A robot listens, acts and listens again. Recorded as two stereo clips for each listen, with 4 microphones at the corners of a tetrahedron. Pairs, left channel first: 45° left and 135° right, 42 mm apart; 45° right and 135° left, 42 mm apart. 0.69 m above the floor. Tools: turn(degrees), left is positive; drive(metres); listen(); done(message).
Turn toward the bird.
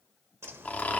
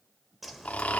turn(degrees=-135)
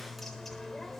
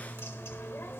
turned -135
turn(degrees=-35)
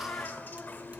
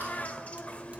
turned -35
turn(degrees=10)
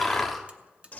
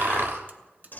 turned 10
done("Found it: a bird, straight ahead.")